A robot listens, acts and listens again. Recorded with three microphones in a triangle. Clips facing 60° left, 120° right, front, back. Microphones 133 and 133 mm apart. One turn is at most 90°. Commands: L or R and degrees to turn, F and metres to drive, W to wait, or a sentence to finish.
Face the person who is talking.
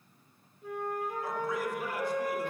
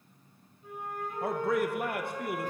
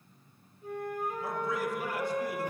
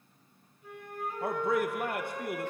R90
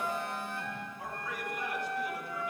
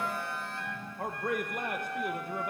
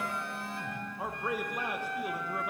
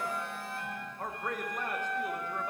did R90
R80
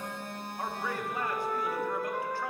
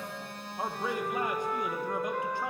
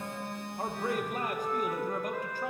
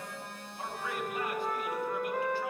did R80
R50
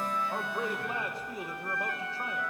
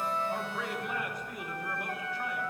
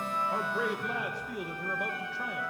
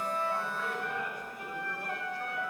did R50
Facing the man speaking, 1 to 2 m away.